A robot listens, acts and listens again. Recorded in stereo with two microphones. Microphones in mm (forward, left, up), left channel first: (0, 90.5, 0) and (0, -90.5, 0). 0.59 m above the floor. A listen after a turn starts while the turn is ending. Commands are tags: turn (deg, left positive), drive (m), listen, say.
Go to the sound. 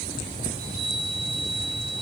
<turn deg="-45"/>
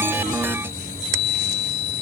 <drive m="1.0"/>
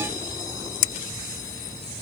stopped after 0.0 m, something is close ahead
<listen/>
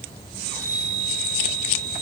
<say>Blocked. The chime is further on, straight ahead.</say>